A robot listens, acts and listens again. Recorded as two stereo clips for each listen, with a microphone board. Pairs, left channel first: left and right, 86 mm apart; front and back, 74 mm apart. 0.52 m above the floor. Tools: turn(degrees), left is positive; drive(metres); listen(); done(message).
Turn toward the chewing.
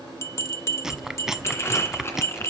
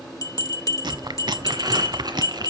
turn(degrees=-175)
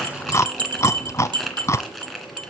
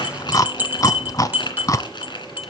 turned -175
turn(degrees=35)
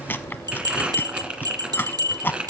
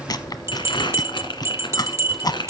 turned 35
turn(degrees=25)
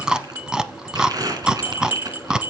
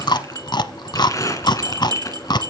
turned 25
turn(degrees=-10)
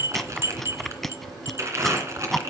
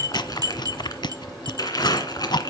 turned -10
done("Facing the chewing, under 1 m away.")